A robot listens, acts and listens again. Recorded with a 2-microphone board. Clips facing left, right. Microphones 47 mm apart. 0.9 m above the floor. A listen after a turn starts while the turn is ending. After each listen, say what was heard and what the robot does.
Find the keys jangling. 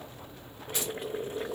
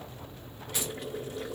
The keys jangling: about 30° left or 150° left. Turn 30° left.
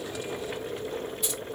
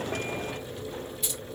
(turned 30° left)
Facing the keys jangling, 2 to 4 m away.